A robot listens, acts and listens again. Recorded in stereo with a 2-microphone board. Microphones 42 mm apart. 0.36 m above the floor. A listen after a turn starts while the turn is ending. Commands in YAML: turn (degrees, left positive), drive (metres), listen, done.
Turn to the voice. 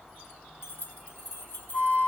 listen: true
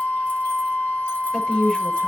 turn: 30
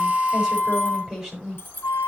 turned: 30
done: "Found it: a woman speaking, straight ahead, over 4 m away."